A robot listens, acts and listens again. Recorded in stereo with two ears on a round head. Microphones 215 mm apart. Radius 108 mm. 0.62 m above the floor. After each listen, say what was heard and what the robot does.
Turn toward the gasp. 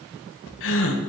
The gasp: about 60° left or 120° left. Turn 60° left.
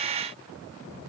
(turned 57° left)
Keep listening.
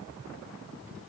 I heard a gasp, but can't make it out now. It was about 5° left or 65° left.